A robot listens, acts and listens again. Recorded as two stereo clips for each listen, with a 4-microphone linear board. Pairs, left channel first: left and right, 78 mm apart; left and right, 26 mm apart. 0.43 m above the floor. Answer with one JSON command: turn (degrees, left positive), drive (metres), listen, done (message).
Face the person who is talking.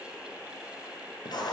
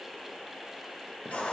{"listen": true}
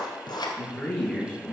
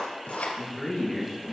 {"turn": 30}
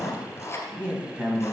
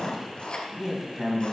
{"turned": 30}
{"turn": -20}
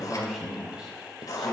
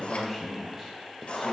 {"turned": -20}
{"turn": -10}
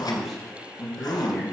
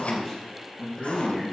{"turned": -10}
{"done": "Found it: a man speaking, straight ahead."}